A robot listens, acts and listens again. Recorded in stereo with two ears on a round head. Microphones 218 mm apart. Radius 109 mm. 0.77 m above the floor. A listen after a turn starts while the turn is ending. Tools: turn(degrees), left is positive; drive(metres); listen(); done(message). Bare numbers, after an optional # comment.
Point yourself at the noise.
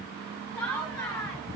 turn(30)
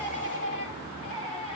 # So it is at 150° left.
turn(150)
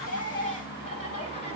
# The laughter is now 25° left.
turn(25)
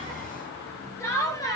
# The laughter is now 15° left.
turn(15)
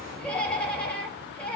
done("Facing the laughter.")